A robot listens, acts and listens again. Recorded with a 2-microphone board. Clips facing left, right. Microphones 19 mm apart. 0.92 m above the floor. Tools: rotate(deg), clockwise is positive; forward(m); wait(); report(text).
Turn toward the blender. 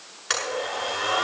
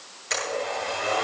rotate(-70)
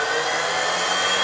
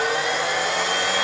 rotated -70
rotate(-40)
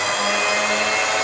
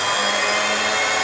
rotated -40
report("Found it: a blender, straight ahead, over 4 m away.")